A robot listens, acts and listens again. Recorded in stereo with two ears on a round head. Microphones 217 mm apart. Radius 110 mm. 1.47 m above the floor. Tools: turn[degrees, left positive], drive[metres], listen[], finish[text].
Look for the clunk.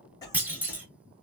Action: turn[-30]
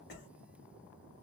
Action: listen[]
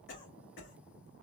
Action: finish[I heard a clunk, but can't make it out now. It was about 25° left or 145° right.]